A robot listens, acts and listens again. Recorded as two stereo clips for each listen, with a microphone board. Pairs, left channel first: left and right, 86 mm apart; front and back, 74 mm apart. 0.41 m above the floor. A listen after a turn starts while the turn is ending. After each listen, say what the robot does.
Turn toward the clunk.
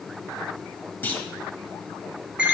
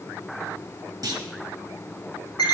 Turn 155° left.
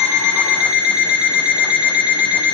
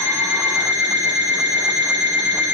Facing where the clunk came from. I can't hear it now.